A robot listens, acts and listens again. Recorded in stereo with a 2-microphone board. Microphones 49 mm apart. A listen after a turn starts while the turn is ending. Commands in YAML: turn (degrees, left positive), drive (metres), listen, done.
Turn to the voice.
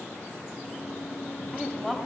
turn: 30
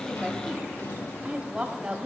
turn: -25
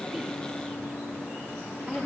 done: "Found it: a woman speaking, straight ahead, 1 to 2 m away."